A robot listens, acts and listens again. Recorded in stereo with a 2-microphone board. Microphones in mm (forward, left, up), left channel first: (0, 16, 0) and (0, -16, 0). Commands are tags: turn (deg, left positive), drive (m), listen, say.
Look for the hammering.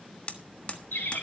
<turn deg="40"/>
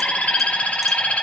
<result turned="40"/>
<listen/>
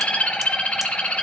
<listen/>
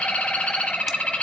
<say>I heard hammering, but can't make it out now. It was about straight ahead or 100° left.</say>